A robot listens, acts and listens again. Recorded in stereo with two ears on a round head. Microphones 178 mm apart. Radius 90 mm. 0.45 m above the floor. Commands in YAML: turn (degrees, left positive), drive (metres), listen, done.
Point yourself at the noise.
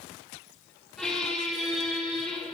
turn: 30
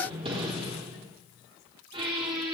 turn: -30
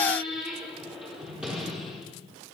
done: "Facing the squeak, 2 to 4 m away."